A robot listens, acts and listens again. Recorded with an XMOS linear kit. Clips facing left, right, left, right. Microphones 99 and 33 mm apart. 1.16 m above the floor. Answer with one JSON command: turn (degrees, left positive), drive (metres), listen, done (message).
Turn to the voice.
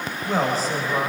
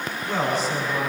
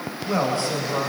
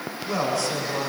{"turn": 40}
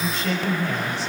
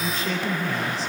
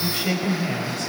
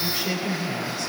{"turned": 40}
{"turn": 100}
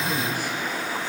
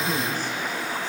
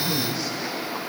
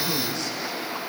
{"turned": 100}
{"turn": 15}
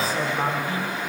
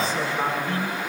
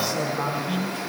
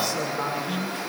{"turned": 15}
{"done": "Facing the man speaking, over 4 m away."}